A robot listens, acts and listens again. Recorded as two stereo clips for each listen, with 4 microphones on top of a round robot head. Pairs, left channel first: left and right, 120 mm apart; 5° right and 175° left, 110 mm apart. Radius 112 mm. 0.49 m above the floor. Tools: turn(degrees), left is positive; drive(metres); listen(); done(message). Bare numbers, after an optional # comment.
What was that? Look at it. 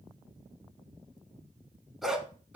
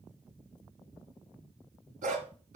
# The dog barking: 175° right.
turn(-175)
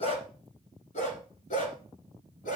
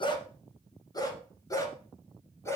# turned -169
# The dog barking is now 65° left.
turn(65)
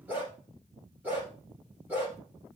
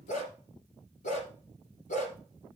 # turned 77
# The dog barking is now 10° right.
turn(-10)
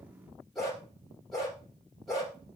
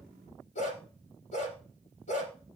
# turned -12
done("Found it: a dog barking, straight ahead.")